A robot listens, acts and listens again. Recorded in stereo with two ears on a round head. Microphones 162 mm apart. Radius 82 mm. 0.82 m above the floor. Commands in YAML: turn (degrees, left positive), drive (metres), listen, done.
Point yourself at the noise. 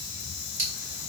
turn: -75
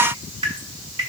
turn: -30
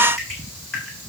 done: "Found it: dripping, straight ahead, over 4 m away."